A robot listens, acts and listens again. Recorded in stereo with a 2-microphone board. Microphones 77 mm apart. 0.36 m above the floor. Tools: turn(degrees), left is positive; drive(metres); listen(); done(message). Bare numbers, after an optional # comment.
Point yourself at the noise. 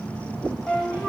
turn(30)
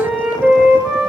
# So it is at 15° right.
turn(-15)
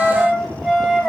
done("Facing the flute, 1 to 2 m away.")